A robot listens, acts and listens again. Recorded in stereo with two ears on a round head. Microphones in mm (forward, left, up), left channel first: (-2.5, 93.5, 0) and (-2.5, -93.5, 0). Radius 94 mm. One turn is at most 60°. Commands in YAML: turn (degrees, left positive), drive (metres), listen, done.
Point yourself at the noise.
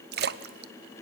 turn: -50
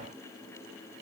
listen: true
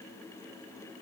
done: "I heard a splash, but can't make it out now. It was about straight ahead or 80° right."